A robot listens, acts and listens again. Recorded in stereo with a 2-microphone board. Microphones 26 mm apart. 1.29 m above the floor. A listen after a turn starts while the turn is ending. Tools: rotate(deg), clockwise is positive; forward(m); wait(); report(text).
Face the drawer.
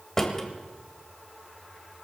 rotate(-15)
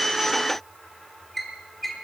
report("Found it: a drawer, straight ahead.")